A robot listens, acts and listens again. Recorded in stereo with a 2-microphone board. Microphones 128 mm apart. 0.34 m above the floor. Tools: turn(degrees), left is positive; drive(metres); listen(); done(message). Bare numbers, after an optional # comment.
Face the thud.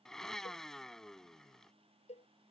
listen()
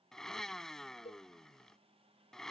listen()
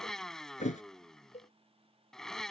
# The thud: about 70° left or 110° left.
turn(70)
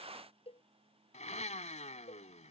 listen()
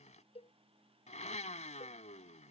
done("I heard a thud, but can't make it out now. It was about straight ahead or 40° left.")